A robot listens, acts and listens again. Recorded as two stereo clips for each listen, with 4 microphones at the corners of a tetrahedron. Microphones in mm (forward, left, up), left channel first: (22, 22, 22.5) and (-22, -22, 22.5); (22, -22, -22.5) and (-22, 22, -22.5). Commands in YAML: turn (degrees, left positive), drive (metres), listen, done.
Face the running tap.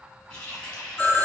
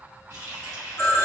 turn: 115
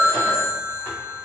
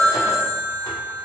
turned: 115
listen: true
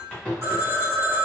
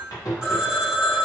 turn: -30
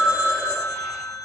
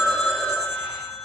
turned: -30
listen: true
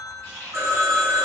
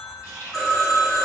done: "Facing the running tap."